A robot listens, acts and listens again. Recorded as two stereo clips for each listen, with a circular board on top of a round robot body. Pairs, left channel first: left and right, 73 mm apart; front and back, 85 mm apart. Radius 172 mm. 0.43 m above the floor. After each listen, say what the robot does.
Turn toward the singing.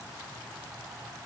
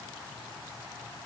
Keep listening.
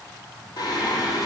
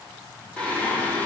Turn 70° left.
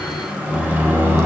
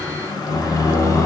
Turn 40° right.
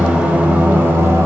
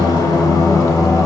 Turn 40° right.
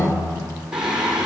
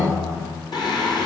Turn 15° right.
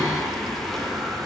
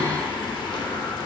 Facing the singing, 2 to 4 m away.